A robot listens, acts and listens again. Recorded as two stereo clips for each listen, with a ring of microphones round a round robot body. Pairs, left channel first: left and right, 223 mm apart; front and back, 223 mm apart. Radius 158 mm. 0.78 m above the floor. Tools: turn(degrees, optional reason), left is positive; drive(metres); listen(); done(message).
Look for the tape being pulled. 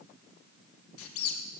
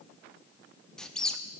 listen()
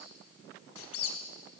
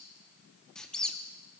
listen()
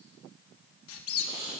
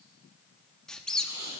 turn(degrees=-145, reason="The tape being pulled: 145° right.")
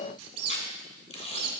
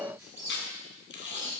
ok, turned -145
turn(degrees=30, reason="The tape being pulled is now 30° left.")
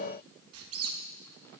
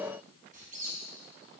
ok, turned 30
listen()
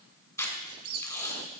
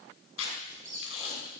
turn(degrees=15, reason="The tape being pulled is now 15° left.")
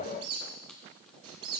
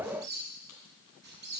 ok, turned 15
listen()
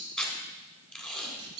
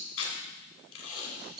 done("Found it: tape being pulled, straight ahead, 2 to 4 m away.")